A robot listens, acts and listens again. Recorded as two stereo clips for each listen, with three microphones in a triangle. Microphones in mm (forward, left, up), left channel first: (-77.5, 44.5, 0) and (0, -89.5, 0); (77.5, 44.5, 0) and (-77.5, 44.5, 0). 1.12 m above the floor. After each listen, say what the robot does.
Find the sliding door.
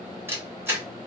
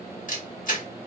Keep listening.
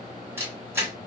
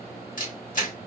Keep listening.
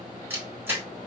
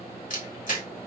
I can't make out a sliding door to turn to.